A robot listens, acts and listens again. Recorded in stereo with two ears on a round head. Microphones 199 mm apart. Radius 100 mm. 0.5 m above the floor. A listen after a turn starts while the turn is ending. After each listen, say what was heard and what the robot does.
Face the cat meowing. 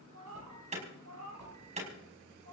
The cat meowing: about 75° right or 105° right. Turn 75° right.
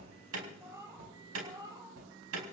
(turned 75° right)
So it is at 15° right. Turn 15° right.
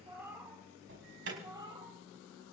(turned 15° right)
The cat meowing is now 20° right. Turn 20° right.
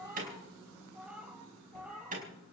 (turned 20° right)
Found it: a cat meowing, straight ahead, 2 to 4 m away.